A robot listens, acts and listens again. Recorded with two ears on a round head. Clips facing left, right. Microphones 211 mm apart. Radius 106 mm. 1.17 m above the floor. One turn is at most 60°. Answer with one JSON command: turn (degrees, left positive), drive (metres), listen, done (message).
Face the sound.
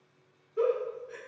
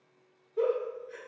{"turn": 30}
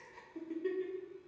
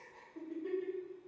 {"turn": 60}
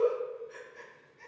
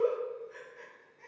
{"turn": 60}
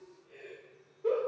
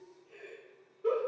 {"turn": -15}
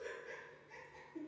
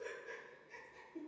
{"turn": -10}
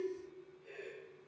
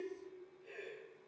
{"done": "Found it: a giggle, straight ahead."}